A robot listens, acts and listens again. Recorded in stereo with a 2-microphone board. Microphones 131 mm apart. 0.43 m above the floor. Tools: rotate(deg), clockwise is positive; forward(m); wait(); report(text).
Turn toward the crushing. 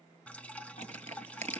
rotate(60)
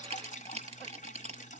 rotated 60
rotate(55)
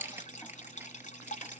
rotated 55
rotate(15)
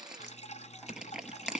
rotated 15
report("Facing the crushing.")